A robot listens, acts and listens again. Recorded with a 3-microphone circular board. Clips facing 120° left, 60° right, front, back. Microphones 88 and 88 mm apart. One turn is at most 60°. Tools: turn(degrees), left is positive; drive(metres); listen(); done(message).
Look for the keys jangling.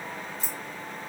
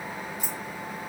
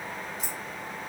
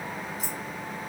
turn(degrees=-60)
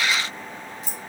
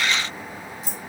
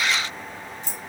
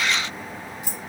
turn(degrees=-60)
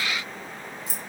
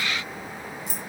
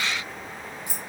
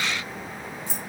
turn(degrees=-60)
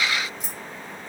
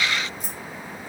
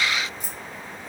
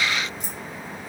turn(degrees=-30)
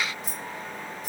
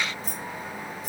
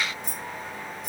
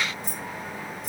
turn(degrees=-20)
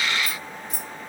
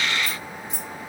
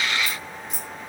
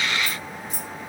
done("Found it: keys jangling, straight ahead, 1 to 2 m away.")